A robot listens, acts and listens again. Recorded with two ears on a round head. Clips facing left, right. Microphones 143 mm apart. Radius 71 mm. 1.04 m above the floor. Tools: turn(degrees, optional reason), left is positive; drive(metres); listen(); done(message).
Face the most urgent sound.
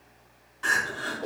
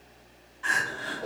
turn(degrees=65, reason="The crying: about 65° left or 115° left.")
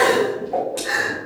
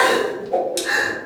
done("Found it: crying, straight ahead, 2 to 4 m away.")